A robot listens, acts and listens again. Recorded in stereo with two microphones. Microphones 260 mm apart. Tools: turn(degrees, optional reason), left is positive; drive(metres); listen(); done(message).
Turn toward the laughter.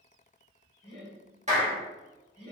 turn(degrees=50, reason="The laughter: about 50° left or 130° left.")
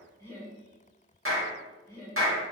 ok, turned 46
turn(degrees=15, reason="So it is at 15° left.")
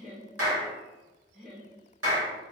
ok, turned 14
done("Facing the laughter, 1 to 2 m away.")